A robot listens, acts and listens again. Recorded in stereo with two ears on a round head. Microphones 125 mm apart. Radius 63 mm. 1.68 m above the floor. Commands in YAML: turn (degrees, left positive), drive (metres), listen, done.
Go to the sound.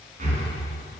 turn: -55
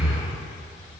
drive: 1.0
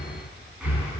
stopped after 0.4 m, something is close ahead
turn: -10
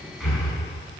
done: "Blocked. The breathing is further on, straight ahead."